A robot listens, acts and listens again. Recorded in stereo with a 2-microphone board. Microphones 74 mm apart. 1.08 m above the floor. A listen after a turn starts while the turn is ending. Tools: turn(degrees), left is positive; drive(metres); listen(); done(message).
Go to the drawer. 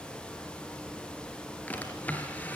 turn(degrees=25)
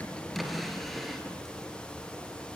drive(metres=1.0)
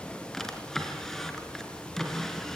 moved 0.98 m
drive(metres=1.0)
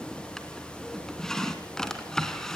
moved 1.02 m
turn(degrees=10)
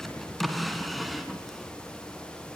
drive(metres=1.0)
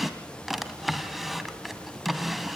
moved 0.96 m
drive(metres=1.0)
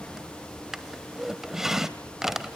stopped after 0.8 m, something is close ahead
done("Arrived at the drawer, straight ahead.")